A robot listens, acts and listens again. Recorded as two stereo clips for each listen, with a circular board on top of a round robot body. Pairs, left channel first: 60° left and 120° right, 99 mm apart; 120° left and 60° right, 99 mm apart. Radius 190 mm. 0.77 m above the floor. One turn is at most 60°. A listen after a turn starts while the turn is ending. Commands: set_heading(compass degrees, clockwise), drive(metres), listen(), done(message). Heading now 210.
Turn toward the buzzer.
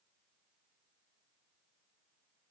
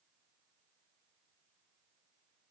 listen()
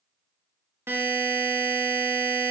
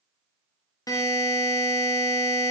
set_heading(150)
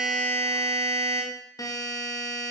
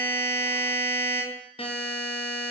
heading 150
set_heading(90)
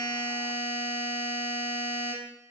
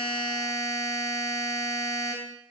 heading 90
set_heading(30)
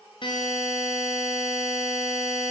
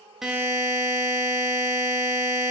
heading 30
done("Facing the buzzer.")